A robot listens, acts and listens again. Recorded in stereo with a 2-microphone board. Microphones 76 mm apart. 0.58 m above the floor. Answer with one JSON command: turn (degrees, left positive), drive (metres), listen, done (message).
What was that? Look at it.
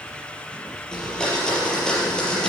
{"turn": 30}
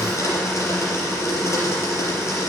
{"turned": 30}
{"turn": 140}
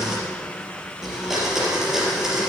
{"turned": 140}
{"done": "Facing the blender, over 4 m away."}